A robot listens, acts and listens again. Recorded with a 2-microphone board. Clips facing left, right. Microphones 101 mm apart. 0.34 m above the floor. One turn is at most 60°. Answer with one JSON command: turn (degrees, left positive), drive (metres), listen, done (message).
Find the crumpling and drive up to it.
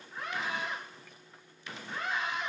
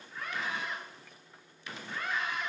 {"listen": true}
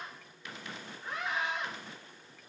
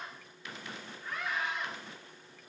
{"listen": true}
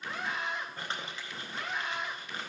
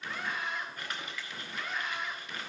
{"turn": 30}
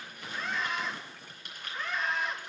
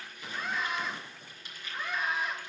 {"turn": 60}
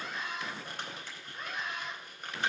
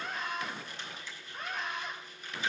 {"turn": 60}
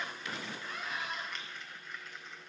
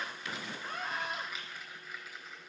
{"drive": 1.0}
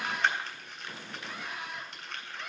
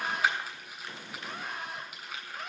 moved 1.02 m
{"drive": 1.0}
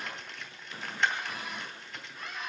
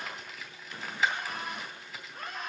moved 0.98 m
{"drive": 1.0}
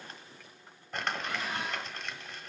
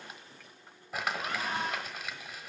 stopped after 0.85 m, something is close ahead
{"done": "Arrived at the crumpling, straight ahead."}